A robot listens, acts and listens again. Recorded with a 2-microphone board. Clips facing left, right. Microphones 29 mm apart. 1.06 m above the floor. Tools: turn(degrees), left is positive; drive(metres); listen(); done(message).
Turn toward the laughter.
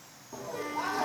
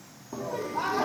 turn(degrees=-25)
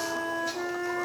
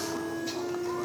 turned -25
listen()
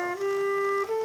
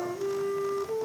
listen()
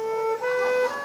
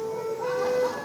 done("I heard laughter, but can't make it out now. It was about straight ahead or 130° right.")